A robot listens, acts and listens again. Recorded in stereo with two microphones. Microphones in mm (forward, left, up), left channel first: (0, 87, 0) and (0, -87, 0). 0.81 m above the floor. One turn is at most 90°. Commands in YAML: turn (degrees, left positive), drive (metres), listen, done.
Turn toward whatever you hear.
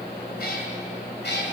turn: 90
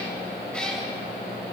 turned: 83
done: "Facing the cat meowing."